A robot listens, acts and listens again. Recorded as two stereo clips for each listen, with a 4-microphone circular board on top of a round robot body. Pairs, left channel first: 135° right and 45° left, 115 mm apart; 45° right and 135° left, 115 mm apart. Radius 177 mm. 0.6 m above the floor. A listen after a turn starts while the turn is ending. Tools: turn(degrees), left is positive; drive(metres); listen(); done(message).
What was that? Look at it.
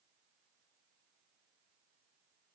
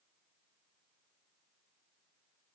listen()
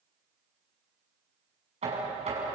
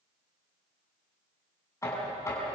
turn(degrees=20)
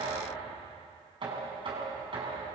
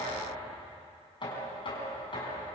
done("Facing the knocking, over 4 m away.")